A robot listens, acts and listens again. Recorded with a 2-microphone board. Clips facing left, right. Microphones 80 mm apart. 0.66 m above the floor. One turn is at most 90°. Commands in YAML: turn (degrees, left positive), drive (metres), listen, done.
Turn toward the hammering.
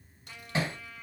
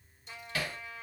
turn: 25
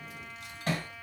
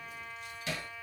turn: 90
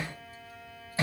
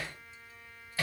turn: 20
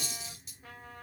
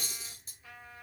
listen: true
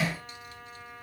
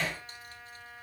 done: "Facing the hammering, 1 to 2 m away."